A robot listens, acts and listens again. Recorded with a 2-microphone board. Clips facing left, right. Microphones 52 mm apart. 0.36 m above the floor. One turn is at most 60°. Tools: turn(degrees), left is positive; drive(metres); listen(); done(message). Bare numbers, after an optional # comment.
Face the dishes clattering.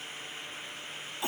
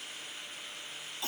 listen()
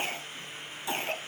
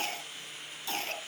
listen()
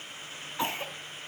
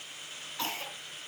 done("I can't make out dishes clattering, only a cough.")